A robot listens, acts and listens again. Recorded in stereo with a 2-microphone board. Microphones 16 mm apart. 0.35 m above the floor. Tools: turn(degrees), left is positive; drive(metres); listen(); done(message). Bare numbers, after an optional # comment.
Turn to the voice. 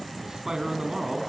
# The man speaking: about 30° right or 150° right.
turn(-30)
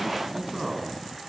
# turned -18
# So it is at 10° right.
turn(-10)
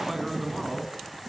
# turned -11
done("Found it: a man speaking, straight ahead, 2 to 4 m away.")